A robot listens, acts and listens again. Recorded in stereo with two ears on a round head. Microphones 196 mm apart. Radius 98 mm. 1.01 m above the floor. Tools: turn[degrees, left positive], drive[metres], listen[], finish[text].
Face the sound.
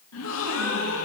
Thought: The gasp: about 70° left or 110° left.
Action: turn[70]
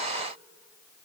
Action: listen[]
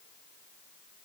Action: finish[I heard a gasp, but can't make it out now. It was about straight ahead or 40° left.]